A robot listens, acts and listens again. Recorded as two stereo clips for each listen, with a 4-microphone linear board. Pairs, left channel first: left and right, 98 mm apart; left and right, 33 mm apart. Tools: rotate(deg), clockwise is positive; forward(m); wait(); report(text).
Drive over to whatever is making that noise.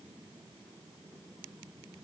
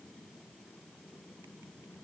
wait()
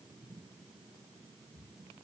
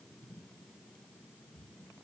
wait()
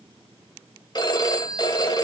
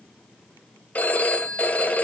rotate(-45)
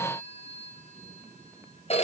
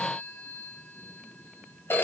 rotate(-95)
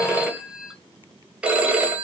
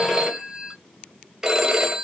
rotate(10)
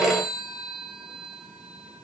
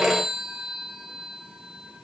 forward(1.0)
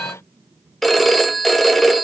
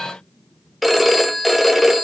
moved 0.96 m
forward(1.0)
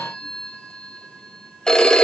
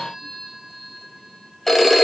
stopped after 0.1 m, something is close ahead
report("I am next to the phone ringing.")